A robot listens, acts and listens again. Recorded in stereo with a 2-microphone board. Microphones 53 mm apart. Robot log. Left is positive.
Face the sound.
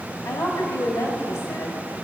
note: The woman speaking: about 65° left or 115° left.
cmd yaw +65
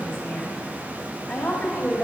note: So it is at 20° left.
cmd yaw +20
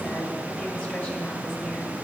cmd idle
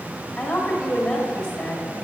note: The woman speaking is now 10° left.
cmd yaw +10
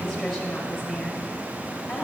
end: Facing the woman speaking, 1 to 2 m away.